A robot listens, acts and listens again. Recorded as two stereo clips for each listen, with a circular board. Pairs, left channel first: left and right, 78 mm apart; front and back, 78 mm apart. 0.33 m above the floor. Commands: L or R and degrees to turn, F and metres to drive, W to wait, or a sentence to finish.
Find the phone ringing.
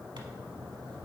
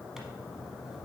W
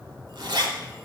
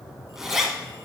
W
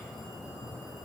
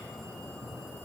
I can't make out a phone ringing to turn to.